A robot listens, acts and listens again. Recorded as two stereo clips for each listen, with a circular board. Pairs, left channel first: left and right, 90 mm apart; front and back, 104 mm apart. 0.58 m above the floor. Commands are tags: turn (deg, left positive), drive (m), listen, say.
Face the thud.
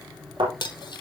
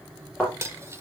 <turn deg="-80"/>
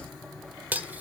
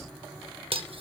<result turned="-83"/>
<say>Facing where the thud came from. I can't hear it now.</say>